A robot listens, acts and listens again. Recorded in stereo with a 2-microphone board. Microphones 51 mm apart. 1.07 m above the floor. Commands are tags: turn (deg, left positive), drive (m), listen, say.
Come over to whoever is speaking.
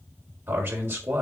<turn deg="-45"/>
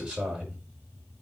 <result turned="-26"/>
<turn deg="-20"/>
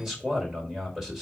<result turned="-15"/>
<drive m="1.0"/>
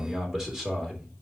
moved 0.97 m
<turn deg="-10"/>
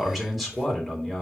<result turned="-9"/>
<drive m="1.0"/>
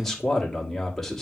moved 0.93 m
<turn deg="10"/>
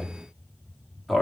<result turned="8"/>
<drive m="1.0"/>
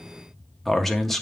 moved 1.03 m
<drive m="1.0"/>
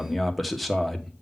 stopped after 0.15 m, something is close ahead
<say>I am next to the man speaking.</say>